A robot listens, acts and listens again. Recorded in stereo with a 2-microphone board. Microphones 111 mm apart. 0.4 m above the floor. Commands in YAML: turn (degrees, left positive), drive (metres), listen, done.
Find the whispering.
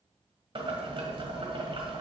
listen: true
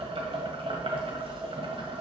listen: true
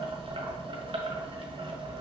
done: "I can't make out whispering, only boiling."